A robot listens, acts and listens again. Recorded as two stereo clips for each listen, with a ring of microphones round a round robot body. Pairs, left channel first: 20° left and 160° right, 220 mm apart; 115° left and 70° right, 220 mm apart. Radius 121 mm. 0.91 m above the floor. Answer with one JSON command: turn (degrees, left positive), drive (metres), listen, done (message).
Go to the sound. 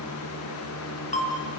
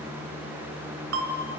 {"turn": -35}
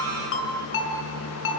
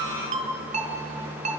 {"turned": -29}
{"drive": 1.0}
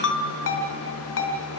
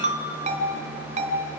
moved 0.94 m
{"turn": -10}
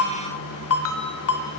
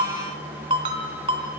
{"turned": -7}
{"drive": 1.0}
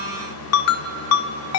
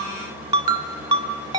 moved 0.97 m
{"drive": 1.0}
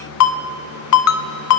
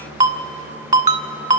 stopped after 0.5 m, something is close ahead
{"done": "Arrived at the ringtone, straight ahead."}